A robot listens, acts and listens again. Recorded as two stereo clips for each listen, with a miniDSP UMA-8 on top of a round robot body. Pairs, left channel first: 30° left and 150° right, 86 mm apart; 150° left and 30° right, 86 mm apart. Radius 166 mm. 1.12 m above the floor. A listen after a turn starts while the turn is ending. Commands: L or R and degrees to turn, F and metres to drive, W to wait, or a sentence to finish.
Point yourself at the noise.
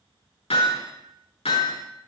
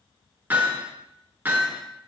L40
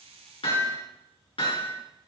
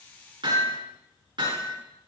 Found it: hammering, straight ahead, over 4 m away.